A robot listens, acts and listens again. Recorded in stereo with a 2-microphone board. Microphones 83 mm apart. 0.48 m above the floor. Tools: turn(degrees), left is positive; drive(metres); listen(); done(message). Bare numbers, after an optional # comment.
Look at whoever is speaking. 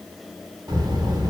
# The child speaking: about 55° right or 125° right.
turn(-55)
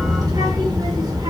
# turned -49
# So it is at 60° right.
turn(-60)
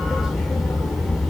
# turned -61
done("Facing the child speaking, under 1 m away.")